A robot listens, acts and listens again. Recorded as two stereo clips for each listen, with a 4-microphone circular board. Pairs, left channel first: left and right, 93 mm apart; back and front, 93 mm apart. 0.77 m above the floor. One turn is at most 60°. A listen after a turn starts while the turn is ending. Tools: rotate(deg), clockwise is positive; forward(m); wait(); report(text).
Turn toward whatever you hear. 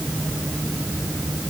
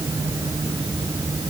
wait()
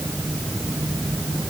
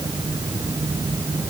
wait()
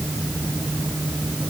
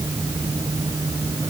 report("I can't make out anything to turn to.")